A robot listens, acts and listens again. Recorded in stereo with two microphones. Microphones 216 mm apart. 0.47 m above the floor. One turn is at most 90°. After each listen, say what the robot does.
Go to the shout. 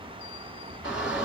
Turn 30° right.
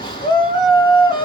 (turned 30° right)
Turn 25° left.
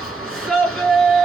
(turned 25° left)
Drive 1.0 m forward.
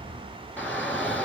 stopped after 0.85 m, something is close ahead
Turn 10° left.
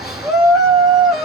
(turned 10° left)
I am next to the shout.